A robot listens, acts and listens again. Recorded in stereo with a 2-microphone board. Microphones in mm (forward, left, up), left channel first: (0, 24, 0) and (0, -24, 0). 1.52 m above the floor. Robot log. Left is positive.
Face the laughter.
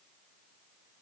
cmd idle
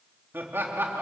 note: The laughter: about 55° right or 125° right.
cmd yaw -55
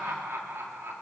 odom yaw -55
note: So it is at 70° right.
cmd yaw -70
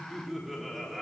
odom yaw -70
end: Found it: laughter, straight ahead, 2 to 4 m away.